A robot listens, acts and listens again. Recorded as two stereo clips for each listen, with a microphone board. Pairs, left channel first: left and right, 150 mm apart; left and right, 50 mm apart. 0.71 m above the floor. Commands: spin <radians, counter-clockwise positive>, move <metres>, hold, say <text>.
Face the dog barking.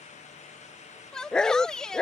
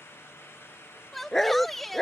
spin 0.52
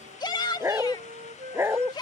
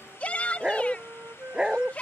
spin -0.26
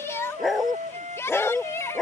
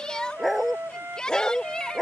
say Facing the dog barking.